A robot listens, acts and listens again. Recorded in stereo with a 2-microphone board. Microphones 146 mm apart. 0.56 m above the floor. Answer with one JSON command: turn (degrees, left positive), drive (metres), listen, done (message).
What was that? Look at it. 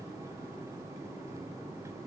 {"listen": true}
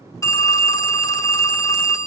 {"turn": 20}
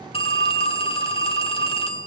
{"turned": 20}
{"turn": 135}
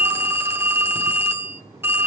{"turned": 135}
{"turn": -20}
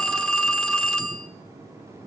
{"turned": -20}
{"done": "Found it: a phone ringing, straight ahead, under 1 m away."}